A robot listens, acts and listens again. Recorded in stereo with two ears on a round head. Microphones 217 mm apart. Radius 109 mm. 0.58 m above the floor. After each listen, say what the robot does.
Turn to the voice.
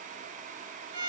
Keep listening.
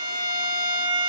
Keep listening.
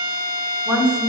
Turn 30° right.
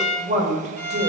Turn 145° right.
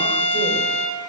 Keep listening.
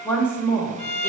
Turn 10° left.
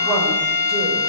Keep listening.
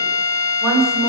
Found it: a woman speaking, straight ahead.